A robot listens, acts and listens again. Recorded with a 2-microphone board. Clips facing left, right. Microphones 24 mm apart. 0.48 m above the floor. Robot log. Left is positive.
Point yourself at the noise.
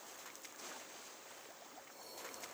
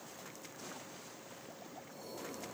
cmd idle
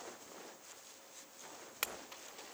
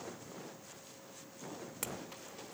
note: The clink: about 40° left or 140° left.
cmd yaw +40
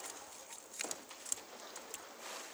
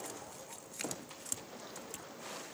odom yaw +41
end: Found it: a clink, straight ahead, under 1 m away.